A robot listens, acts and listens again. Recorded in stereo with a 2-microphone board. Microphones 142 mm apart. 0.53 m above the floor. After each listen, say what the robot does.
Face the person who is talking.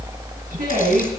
Turn 90° right.
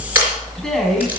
Found it: a man speaking, straight ahead.